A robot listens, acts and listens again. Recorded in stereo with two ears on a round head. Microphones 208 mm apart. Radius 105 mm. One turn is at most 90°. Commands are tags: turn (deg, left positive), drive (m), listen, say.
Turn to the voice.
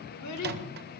<turn deg="90"/>
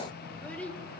<say>Facing the child speaking, 1 to 2 m away.</say>